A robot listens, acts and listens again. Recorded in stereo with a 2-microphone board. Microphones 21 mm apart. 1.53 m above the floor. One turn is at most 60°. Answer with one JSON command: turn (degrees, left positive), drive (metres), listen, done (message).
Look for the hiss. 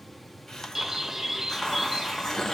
{"turn": 35}
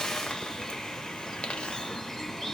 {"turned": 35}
{"turn": 60}
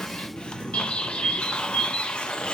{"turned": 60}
{"turn": 50}
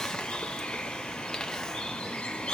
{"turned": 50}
{"listen": true}
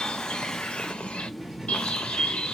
{"listen": true}
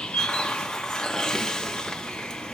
{"turn": 30}
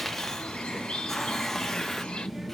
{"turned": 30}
{"turn": 10}
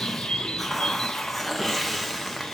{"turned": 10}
{"done": "Facing the hiss, under 1 m away."}